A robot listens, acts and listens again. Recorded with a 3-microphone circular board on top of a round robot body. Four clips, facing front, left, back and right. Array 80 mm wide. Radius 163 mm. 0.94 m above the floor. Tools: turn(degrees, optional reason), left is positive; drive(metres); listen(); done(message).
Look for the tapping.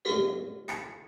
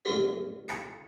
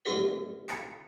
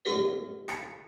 turn(degrees=-70, reason="The tapping: 70° right.")
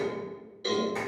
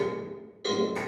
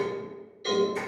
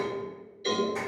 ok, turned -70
listen()
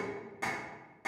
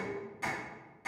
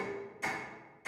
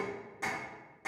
turn(degrees=-25, reason="The tapping is now 25° right.")
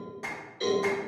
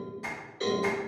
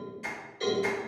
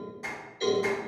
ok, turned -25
turn(degrees=-10, reason="The tapping is now 10° right.")
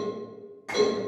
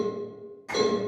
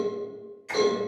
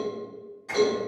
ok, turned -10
done("Facing the tapping.")